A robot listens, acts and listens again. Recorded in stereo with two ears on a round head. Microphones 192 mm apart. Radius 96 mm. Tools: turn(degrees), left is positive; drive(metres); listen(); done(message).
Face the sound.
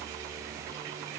listen()
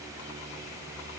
listen()
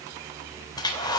turn(degrees=20)
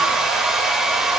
done("Facing the hair dryer.")